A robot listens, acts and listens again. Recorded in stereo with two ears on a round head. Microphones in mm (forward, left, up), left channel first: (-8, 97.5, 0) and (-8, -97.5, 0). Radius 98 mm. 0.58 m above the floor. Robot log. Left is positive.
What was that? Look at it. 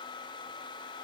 cmd idle
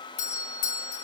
note: The doorbell: about 30° left or 150° left.
cmd yaw +30
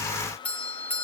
note: So it is at 10° left.
cmd yaw +10
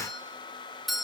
end: Found it: a doorbell, straight ahead, 2 to 4 m away.